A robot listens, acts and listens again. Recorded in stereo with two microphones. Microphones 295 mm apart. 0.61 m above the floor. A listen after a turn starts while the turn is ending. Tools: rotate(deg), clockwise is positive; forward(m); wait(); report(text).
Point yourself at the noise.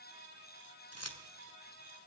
rotate(-60)
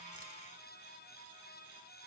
wait()
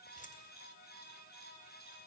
wait()
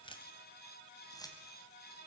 rotate(-10)
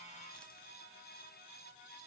wait()
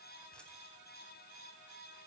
wait()
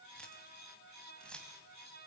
report("Found it: keys jangling, straight ahead.")